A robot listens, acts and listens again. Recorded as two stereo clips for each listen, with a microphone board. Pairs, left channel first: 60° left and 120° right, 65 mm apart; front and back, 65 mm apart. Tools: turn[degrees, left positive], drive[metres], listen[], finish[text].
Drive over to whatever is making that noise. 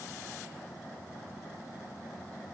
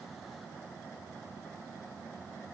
Action: listen[]
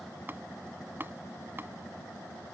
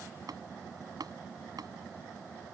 Thought: The tapping: 175° right.
Action: turn[-175]
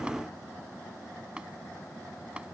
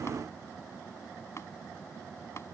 Thought: The tapping is now 50° right.
Action: turn[-50]
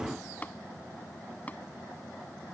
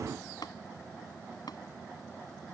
Action: drive[1.0]
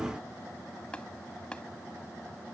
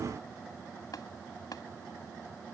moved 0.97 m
Thought: The tapping is now 15° right.
Action: turn[-15]
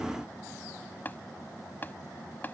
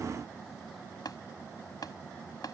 Action: drive[1.0]
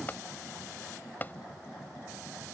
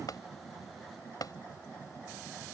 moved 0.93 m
Action: drive[1.0]
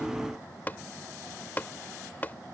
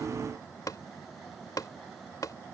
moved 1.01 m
Action: drive[1.0]
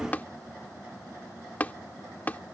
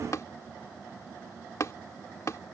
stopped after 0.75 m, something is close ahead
Action: finish[Arrived at the tapping, straight ahead.]